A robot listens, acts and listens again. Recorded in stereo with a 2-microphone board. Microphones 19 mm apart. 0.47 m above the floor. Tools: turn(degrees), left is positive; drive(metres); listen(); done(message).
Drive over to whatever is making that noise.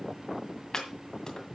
turn(degrees=35)
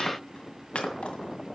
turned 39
turn(degrees=110)
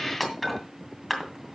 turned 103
drive(metres=1.0)
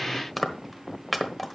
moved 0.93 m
drive(metres=1.0)
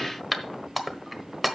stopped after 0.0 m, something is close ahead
done("Arrived at the chopping, straight ahead.")